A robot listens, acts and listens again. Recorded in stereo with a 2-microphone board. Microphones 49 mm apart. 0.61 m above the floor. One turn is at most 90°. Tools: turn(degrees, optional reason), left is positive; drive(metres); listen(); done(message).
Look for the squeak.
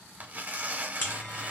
listen()
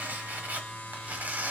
listen()
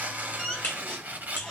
turn(degrees=30)
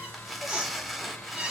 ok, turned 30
turn(degrees=-25, reason="So it is at 25° right.")
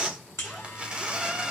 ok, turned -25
done("Facing the squeak, 2 to 4 m away.")